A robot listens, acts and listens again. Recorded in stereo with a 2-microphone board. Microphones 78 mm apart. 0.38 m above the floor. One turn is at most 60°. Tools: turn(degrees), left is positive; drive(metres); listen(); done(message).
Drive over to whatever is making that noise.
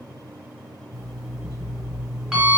turn(degrees=-30)
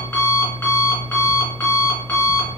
turn(degrees=25)
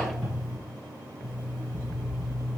turn(degrees=10)
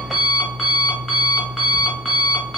drive(metres=1.0)
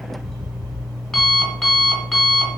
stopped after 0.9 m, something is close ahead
done("Arrived at the alarm clock, straight ahead.")